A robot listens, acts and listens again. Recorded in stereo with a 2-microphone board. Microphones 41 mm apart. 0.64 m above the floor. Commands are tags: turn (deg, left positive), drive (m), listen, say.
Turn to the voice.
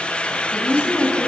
<turn deg="90"/>
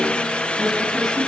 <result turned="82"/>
<turn deg="10"/>
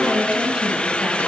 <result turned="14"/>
<turn deg="-20"/>
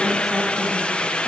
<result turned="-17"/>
<listen/>
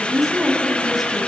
<say>Facing the woman speaking, over 4 m away.</say>